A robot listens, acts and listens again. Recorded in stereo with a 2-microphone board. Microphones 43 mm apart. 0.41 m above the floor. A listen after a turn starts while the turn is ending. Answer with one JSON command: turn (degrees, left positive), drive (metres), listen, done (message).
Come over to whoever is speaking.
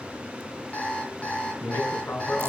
{"turn": 60}
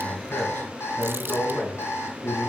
{"turn": 50}
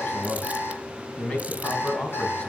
{"turn": 25}
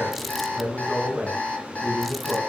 {"turn": -10}
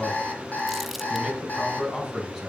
{"drive": 1.0}
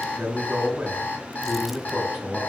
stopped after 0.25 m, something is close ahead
{"done": "Something is in my way. I am facing the man speaking but have not reached it."}